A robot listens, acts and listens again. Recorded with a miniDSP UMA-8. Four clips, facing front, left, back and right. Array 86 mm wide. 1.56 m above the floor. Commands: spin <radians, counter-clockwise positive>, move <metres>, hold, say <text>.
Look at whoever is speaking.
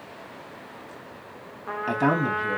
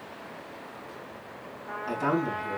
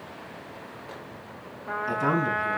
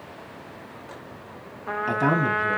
spin -0.61
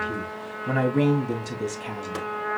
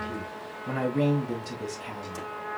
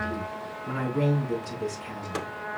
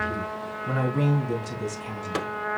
say Facing the man speaking, 2 to 4 m away.